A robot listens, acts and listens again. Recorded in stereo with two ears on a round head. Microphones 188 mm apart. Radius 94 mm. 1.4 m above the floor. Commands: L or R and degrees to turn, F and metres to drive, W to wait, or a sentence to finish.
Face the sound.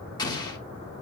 L20
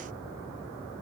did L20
W
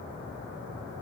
I heard an explosion, but can't make it out now. It was about straight ahead or 140° left.